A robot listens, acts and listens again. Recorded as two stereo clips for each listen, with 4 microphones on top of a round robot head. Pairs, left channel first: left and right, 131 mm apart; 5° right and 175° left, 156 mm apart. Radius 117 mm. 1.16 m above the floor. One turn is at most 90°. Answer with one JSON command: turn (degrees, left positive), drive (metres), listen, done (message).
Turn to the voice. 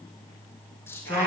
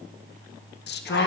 {"turn": 10}
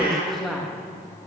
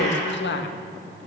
{"done": "Facing the woman speaking."}